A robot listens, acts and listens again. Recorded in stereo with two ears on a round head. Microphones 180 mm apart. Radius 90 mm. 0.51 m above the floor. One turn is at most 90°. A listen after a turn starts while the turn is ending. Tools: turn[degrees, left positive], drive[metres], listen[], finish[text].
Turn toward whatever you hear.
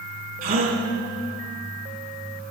Thought: The gasp: about 40° right or 140° right.
Action: turn[-40]
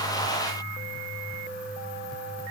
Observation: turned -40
Action: listen[]
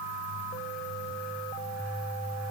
Action: finish[I heard a gasp, but can't make it out now. It was about straight ahead or 100° right.]